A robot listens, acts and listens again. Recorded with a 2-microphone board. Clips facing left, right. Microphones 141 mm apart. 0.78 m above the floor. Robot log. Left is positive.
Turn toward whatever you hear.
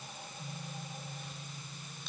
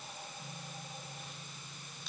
cmd idle
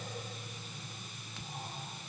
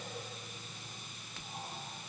cmd idle
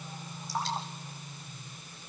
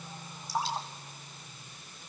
cmd yaw -30
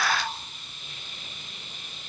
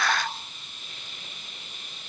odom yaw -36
cmd idle
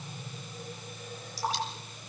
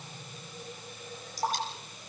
note: So it is at 135° right.
cmd yaw -135
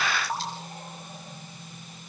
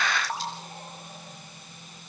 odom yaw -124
note: The dripping is now 10° right.
cmd yaw -10
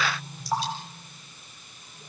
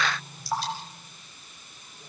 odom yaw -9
end: Found it: dripping, straight ahead, over 4 m away.